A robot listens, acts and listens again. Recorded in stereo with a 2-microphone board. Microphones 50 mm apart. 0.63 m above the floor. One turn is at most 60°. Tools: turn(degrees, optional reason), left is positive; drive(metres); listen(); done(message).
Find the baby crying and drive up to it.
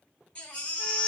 turn(degrees=20, reason="The baby crying: about 20° left or 160° left.")
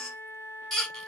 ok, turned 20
drive(metres=1.0)
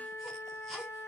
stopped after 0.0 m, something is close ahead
done("Something is in my way. I am facing the baby crying but have not reached it.")